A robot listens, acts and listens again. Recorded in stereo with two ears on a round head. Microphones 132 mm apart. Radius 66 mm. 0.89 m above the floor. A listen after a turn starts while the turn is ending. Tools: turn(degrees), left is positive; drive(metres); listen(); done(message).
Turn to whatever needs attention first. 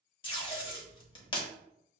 listen()
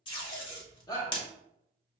turn(degrees=25)
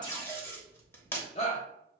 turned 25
turn(degrees=130)
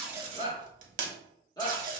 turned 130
turn(degrees=25)
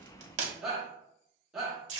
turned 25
done("Found it: a shout, straight ahead, 1 to 2 m away.")